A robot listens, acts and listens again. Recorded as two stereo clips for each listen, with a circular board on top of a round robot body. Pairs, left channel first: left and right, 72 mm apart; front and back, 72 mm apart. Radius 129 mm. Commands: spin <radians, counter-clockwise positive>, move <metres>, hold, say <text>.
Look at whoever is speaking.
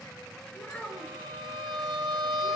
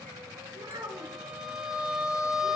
spin 2.88
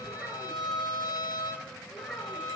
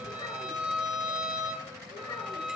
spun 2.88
say Found it: a child speaking, straight ahead, over 4 m away.